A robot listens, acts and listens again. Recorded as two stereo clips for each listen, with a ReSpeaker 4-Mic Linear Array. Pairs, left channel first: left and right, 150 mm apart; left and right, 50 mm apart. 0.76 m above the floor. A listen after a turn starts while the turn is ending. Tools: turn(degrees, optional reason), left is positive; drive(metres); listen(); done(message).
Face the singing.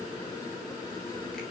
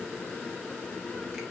listen()
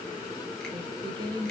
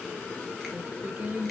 turn(degrees=-35, reason="The singing: about 35° right or 145° right.")
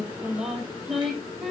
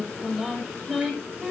done("Facing the singing, 2 to 4 m away.")